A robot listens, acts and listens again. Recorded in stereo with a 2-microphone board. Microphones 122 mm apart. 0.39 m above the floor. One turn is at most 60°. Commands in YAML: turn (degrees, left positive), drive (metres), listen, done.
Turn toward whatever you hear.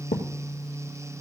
turn: 60
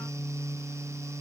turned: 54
turn: 35
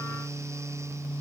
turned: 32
done: "I heard a thud from this way, but can't make it out now."